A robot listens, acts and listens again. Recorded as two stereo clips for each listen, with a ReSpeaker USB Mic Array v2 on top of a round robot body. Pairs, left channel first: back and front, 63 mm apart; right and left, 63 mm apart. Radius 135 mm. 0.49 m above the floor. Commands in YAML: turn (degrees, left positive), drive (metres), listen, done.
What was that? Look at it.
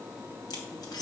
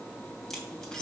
turn: -170
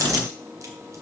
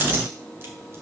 listen: true
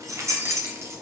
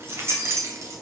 turn: 45
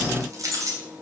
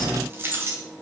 turn: 35
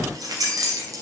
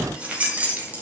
turn: 25
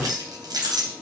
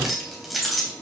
done: "Found it: keys jangling, straight ahead."